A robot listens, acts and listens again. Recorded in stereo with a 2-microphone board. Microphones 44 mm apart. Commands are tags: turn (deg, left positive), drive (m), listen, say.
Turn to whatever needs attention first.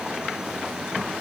<listen/>
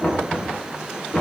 <listen/>
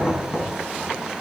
<say>I can't make out anything urgent, only knocking.</say>